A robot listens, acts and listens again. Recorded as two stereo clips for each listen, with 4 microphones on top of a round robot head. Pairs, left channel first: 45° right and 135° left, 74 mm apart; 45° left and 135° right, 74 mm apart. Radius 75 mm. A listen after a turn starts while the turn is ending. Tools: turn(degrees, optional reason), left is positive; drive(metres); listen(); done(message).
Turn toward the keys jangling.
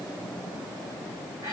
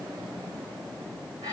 listen()
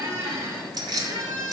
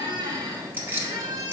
turn(degrees=165, reason="The keys jangling: 165° left.")
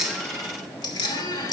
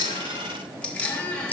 turn(degrees=-20, reason="The keys jangling is now 20° right.")
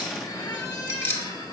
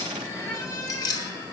turn(degrees=15, reason="The keys jangling is now 15° left.")
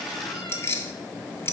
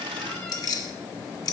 turn(degrees=10, reason="The keys jangling is now 10° left.")
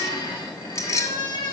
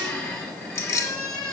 done("Facing the keys jangling.")